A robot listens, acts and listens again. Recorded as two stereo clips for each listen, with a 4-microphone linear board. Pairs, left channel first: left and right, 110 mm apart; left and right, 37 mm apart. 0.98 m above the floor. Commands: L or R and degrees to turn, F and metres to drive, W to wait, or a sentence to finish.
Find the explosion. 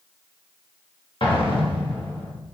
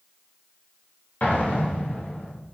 L50
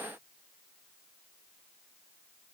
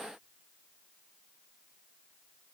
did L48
W
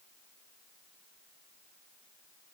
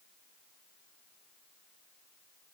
I heard an explosion, but can't make it out now. It was about straight ahead or 85° left.